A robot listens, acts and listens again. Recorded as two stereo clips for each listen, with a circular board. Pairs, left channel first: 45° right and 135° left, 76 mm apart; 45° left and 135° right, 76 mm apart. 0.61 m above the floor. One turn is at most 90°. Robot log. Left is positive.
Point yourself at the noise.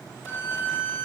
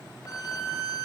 note: The violin: 15° left.
cmd yaw +15
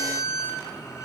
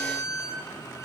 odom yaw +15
end: Found it: a violin, straight ahead.